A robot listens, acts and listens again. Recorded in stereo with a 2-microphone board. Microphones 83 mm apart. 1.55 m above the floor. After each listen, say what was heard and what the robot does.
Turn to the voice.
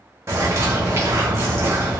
Keep listening.
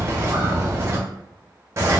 Keep listening.
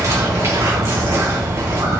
I can't make out anyone speaking, only a bird.